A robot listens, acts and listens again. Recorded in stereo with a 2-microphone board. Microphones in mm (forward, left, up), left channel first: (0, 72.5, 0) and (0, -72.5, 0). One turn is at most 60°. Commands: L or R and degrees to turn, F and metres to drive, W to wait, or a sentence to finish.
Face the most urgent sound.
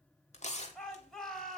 L30
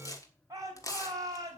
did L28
R25
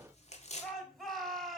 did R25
Facing the shout.